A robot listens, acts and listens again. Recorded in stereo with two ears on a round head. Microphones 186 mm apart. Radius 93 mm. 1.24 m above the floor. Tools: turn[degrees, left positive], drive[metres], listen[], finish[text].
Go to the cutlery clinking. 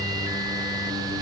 Action: listen[]
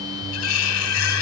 Action: turn[90]
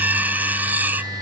Thought: So it is at 10° right.
Action: turn[-10]
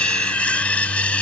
Action: drive[1.0]
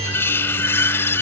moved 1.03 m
Thought: The cutlery clinking is now 10° left.
Action: turn[10]
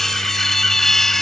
Action: drive[1.0]
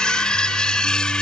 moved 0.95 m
Action: drive[1.0]
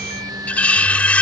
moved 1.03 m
Action: drive[1.0]
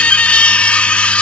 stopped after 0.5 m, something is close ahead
Action: finish[I am next to the cutlery clinking.]